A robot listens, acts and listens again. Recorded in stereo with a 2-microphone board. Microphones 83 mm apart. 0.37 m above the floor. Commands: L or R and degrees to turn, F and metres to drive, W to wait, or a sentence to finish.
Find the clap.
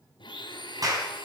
R50
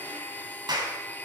R70
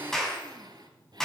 L10
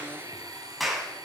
Facing the clap, 2 to 4 m away.